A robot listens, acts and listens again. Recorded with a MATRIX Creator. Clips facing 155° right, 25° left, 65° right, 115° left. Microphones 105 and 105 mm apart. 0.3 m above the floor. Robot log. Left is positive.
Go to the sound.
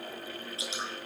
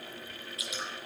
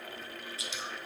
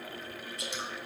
note: The dripping: 145° left.
cmd yaw +145
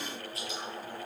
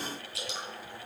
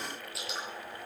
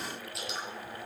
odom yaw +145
note: The dripping is now 20° left.
cmd yaw +20
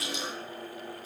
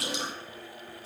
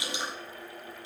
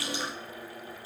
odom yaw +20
cmd fwd 1.0
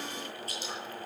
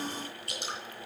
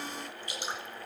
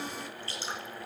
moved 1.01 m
cmd fwd 1.0
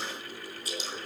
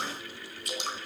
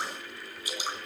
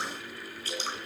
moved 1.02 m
cmd fwd 1.0
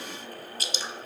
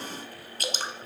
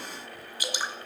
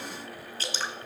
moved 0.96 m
cmd fwd 1.0
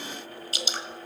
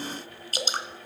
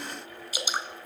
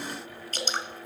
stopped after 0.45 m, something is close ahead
end: Arrived at the dripping, straight ahead.